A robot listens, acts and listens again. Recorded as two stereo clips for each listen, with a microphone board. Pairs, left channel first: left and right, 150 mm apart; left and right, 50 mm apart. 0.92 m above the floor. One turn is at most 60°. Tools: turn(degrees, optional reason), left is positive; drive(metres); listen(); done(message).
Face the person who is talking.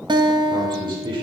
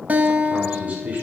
turn(degrees=-35, reason="The man speaking: about 35° right or 145° right.")
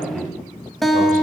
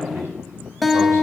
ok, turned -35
turn(degrees=-60, reason="So it is at 110° right.")
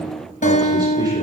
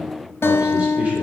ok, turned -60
turn(degrees=-50, reason="Nothing new. It was at 50° right.")
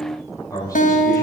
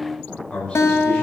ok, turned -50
turn(degrees=25, reason="The man speaking is now 25° left.")
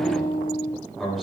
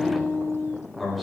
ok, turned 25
done("Facing the man speaking, over 4 m away.")